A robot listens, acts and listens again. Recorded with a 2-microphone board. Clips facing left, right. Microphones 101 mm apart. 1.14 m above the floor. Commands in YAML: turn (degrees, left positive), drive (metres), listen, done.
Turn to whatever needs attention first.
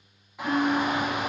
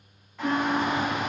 turn: 30
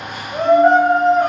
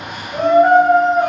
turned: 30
turn: -20
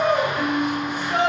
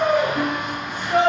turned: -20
done: "Facing the shout, under 1 m away."